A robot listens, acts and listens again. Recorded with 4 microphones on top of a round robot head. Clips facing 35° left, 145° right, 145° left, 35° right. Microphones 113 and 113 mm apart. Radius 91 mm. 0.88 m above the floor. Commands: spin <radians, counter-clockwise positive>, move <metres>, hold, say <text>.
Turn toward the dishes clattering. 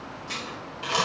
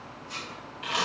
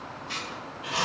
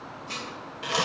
spin 0.26
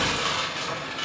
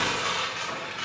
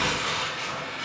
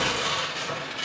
hold
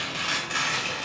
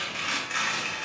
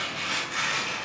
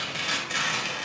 hold
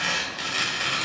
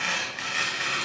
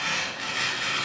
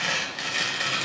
say Facing where the dishes clattering came from. I can't hear it now.